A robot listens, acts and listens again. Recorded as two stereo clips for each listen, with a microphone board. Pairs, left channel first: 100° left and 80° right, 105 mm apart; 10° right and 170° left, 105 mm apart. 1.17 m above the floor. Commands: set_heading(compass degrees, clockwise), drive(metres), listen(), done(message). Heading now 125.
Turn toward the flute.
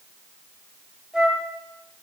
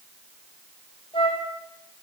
done("Facing the flute, 1 to 2 m away.")